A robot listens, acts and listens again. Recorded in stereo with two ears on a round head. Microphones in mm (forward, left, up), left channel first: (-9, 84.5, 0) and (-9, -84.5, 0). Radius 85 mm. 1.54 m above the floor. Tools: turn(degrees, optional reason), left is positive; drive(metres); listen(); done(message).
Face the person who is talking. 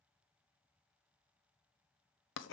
listen()
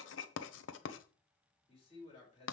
turn(degrees=30, reason="The man speaking: about 30° left or 150° left.")
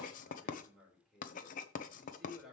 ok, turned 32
done("Found it: a man speaking, straight ahead.")